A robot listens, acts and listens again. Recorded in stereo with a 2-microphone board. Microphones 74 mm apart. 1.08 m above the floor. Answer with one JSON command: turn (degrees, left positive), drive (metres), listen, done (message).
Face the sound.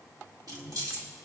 {"turn": -60}
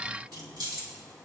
{"turn": -75}
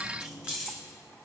{"turn": -15}
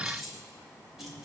{"done": "Facing the keys jangling, 2 to 4 m away."}